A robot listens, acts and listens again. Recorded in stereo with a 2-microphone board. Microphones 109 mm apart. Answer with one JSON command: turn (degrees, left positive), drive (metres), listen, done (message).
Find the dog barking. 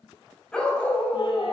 {"turn": 20}
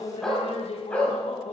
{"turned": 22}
{"turn": 30}
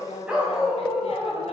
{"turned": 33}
{"done": "Facing the dog barking, 2 to 4 m away."}